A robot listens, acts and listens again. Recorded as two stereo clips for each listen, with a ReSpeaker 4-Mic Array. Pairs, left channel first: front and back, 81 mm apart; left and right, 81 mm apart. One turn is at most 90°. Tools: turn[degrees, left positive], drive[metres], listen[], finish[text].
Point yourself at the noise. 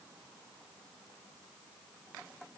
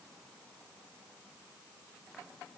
Action: listen[]
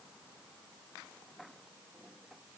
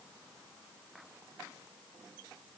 Action: listen[]
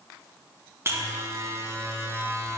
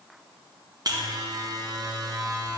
Thought: The buzzer: 125° right.
Action: turn[-90]
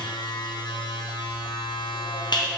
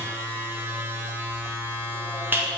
Thought: The buzzer is now 25° right.
Action: turn[-25]
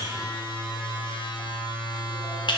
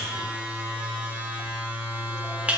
Thought: The buzzer is now 15° right.
Action: turn[-15]
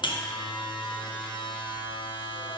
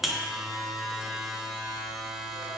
Action: finish[Found it: a buzzer, straight ahead, under 1 m away.]